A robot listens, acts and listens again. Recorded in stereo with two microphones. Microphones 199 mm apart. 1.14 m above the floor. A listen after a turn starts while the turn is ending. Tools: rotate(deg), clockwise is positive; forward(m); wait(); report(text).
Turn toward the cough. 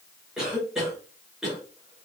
rotate(-30)
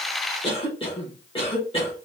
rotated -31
rotate(-150)
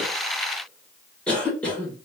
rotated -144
report("Found it: a cough, straight ahead.")